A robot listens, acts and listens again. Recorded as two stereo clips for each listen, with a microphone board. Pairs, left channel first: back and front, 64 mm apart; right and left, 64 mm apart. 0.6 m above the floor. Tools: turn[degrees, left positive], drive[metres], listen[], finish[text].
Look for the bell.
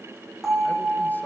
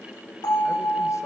Thought: The bell: 85° right.
Action: turn[-85]
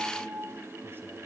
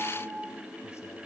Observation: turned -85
Thought: The bell is now 10° right.
Action: turn[-10]
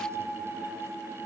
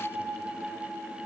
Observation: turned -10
Action: finish[Found it: a bell, straight ahead, over 4 m away.]